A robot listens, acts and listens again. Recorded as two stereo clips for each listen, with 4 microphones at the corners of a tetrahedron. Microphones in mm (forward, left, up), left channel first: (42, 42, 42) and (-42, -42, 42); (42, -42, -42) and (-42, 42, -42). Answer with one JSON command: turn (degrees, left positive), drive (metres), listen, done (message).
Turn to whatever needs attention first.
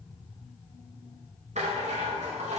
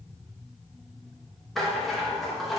{"listen": true}
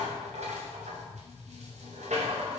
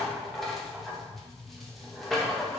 {"listen": true}
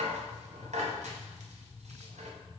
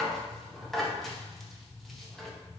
{"done": "I can't make out anything urgent, only a rattle."}